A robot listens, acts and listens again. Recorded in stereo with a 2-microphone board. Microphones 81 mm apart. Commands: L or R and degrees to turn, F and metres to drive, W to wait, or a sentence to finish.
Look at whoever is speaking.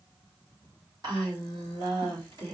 R55
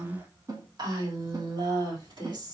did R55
R65
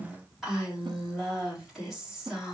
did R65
Facing the woman speaking, 2 to 4 m away.